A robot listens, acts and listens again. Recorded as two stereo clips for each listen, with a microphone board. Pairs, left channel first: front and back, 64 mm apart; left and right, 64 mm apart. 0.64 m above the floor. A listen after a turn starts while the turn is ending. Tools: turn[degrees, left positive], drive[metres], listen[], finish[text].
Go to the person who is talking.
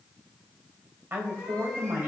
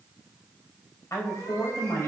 Thought: The woman speaking: 125° left.
Action: turn[125]
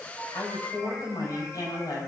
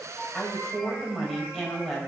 Action: drive[1.0]
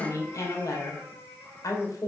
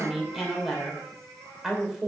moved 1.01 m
Action: drive[1.0]
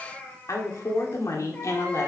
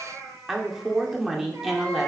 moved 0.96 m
Thought: The woman speaking is now 10° right.
Action: turn[-10]
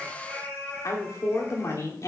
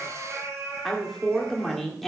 Action: drive[1.0]
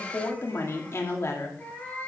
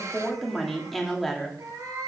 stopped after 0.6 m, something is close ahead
Action: finish[Arrived at the woman speaking, straight ahead.]